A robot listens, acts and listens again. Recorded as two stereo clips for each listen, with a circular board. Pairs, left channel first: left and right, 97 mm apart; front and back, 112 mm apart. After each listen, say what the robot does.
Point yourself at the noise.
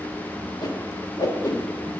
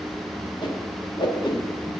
Turn 40° left.
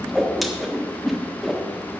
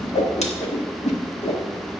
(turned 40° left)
Found it: a whoosh, straight ahead.